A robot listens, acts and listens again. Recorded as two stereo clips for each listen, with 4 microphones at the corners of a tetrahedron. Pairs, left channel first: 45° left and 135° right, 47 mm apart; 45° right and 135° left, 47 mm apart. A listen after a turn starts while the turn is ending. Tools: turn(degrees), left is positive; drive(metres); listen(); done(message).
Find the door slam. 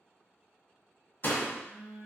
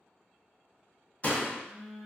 turn(degrees=10)
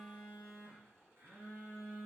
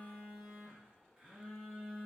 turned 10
done("Facing where the door slam came from. I can't hear it now.")